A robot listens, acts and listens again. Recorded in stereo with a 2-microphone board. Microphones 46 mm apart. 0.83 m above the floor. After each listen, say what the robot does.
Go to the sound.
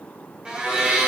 Turn 20° right.
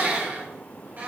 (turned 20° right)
Turn 140° right.
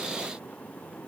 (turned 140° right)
Keep listening.
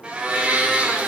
Turn 20° right.
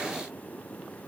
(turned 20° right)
Keep listening.
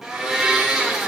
Drive 1.0 m forward.
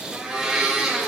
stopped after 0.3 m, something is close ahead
Turn 10° right.
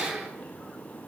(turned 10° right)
Something is in my way. I am facing the blender but have not reached it.